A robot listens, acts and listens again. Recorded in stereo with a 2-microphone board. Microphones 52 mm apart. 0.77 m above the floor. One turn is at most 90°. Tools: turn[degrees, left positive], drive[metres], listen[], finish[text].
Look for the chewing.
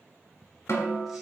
Action: listen[]
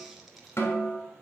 Action: listen[]
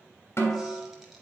Action: finish[I can't make out chewing to turn to.]